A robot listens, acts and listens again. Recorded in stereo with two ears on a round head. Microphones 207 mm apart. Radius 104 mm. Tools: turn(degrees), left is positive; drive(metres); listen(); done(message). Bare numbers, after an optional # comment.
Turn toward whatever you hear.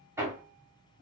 turn(-30)
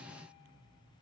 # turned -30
listen()
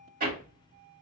# So it is at 135° right.
turn(-135)
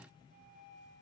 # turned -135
listen()
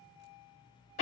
# The hammering is now 35° left.
turn(35)
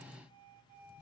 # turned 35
listen()
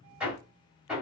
done("Facing the hammering.")